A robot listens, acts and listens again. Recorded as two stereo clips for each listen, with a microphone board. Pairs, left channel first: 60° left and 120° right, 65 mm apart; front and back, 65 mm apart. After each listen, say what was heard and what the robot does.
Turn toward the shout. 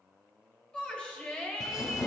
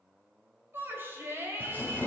The shout: 130° left. Turn 130° left.
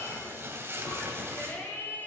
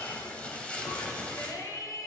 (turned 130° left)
Facing the shout, 2 to 4 m away.